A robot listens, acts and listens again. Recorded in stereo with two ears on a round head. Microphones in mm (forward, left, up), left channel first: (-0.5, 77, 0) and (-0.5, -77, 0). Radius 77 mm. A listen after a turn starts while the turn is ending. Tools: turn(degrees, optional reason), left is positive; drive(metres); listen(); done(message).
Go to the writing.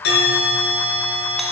listen()
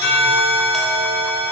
listen()
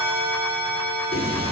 turn(degrees=40, reason="The writing: about 40° left or 140° left.")
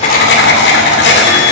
turn(degrees=100, reason="So it is at 100° left.")
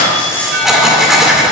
drive(metres=1.0)
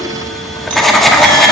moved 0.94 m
drive(metres=1.0)
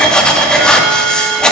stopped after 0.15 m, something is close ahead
done("Arrived at the writing, straight ahead.")